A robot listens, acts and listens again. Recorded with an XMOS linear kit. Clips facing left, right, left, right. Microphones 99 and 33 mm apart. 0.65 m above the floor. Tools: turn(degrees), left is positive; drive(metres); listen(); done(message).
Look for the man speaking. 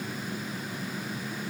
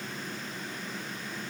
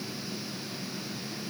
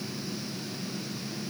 listen()
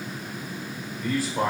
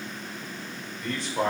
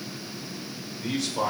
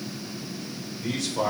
turn(degrees=30)
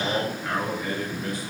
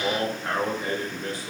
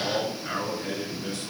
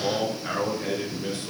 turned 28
turn(degrees=-30)
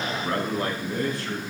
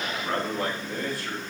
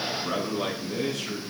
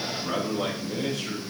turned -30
done("Facing the man speaking, over 4 m away.")